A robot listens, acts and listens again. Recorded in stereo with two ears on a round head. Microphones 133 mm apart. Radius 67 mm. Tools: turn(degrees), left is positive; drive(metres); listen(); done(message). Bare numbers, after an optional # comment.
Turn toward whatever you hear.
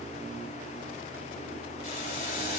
# The boiling: about 60° left or 120° left.
turn(60)
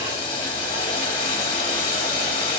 # So it is at 40° left.
turn(40)
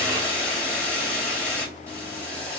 # The boiling is now 10° left.
turn(10)
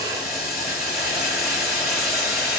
done("Found it: boiling, straight ahead, 1 to 2 m away.")